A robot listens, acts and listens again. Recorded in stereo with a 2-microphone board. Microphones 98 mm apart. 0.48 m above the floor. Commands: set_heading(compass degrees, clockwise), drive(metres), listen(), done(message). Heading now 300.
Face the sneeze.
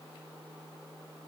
listen()
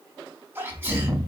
set_heading(325)
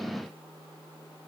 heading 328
listen()
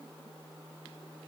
done("I heard a sneeze, but can't make it out now. It was about 5° left or 130° right.")